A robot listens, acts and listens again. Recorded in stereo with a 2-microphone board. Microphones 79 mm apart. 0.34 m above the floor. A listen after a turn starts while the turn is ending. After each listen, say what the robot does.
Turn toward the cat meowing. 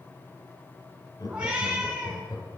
Turn 15° right.
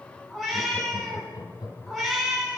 Facing the cat meowing, 1 to 2 m away.